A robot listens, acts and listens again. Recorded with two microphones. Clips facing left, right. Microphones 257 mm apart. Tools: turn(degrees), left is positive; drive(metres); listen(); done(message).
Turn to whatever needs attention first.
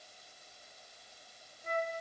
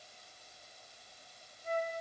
listen()
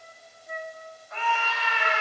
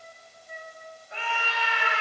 turn(degrees=-35)
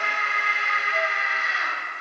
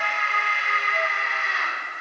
done("Facing the scream, over 4 m away.")